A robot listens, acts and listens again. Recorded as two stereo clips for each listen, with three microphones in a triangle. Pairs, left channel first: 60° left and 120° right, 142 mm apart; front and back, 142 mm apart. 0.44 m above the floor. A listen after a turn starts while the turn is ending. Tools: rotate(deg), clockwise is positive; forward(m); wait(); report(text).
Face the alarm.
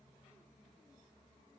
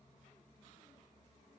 wait()
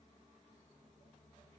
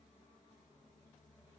wait()
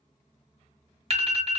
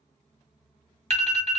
rotate(150)
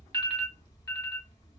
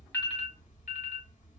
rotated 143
report("Facing the alarm, 1 to 2 m away.")